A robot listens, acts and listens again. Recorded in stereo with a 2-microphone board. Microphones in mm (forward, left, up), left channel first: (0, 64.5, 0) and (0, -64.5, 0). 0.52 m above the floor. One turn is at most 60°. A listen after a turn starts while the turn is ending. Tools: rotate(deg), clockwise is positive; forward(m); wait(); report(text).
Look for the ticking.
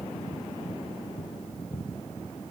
wait()
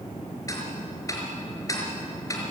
rotate(-25)
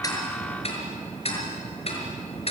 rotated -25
rotate(-60)
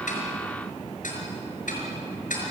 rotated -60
rotate(-60)
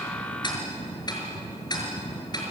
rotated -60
rotate(-30)
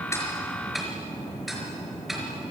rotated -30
report("Facing the ticking.")